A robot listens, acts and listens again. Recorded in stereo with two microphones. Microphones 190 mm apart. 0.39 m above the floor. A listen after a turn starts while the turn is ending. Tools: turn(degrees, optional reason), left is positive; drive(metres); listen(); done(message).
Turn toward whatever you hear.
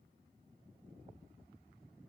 listen()
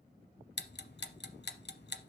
turn(degrees=70, reason="The ticking: about 70° left or 110° left.")
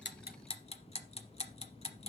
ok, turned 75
turn(degrees=35, reason="So it is at 35° left.")
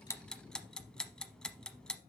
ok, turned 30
done("Facing the ticking.")